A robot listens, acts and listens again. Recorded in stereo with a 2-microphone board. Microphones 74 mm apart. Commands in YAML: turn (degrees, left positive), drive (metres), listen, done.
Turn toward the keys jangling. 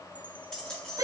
turn: 30
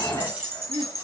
turn: -25
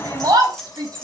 done: "Facing the keys jangling."